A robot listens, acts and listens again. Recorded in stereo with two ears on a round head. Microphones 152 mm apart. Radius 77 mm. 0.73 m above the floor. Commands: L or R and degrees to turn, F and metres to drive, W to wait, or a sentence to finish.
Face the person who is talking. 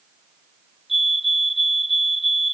W
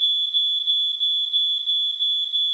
W
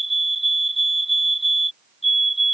I can't make out anyone speaking to turn to.